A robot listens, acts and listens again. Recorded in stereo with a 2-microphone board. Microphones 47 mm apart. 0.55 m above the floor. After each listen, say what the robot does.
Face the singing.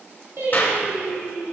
Turn 55° right.
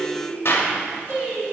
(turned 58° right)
Turn 70° right.
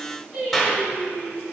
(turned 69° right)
Turn 10° right.
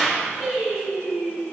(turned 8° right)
Found it: singing, straight ahead.